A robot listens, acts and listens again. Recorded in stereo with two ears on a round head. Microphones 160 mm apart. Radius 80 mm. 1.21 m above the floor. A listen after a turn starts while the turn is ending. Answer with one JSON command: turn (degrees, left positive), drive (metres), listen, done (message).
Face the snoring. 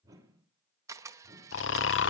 {"turn": 90}
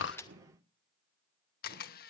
{"listen": true}
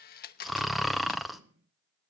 {"done": "Facing the snoring."}